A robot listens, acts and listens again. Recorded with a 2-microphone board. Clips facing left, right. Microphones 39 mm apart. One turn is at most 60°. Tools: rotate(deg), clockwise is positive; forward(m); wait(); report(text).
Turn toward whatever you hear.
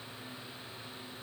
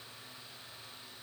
wait()
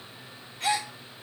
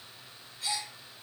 rotate(-60)
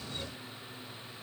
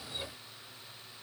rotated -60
wait()
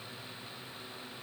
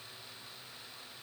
report("I heard a gasp, but can't make it out now. It was about 10° left or 50° left.")